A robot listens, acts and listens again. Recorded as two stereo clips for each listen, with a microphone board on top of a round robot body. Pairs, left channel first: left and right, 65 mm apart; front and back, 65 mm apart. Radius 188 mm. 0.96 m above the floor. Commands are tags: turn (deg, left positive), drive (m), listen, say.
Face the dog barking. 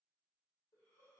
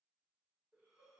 <listen/>
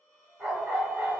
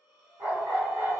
<turn deg="180"/>
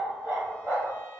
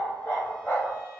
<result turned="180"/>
<turn deg="-50"/>
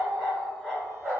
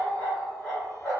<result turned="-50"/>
<turn deg="-15"/>
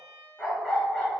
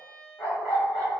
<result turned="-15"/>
<say>Found it: a dog barking, straight ahead, 1 to 2 m away.</say>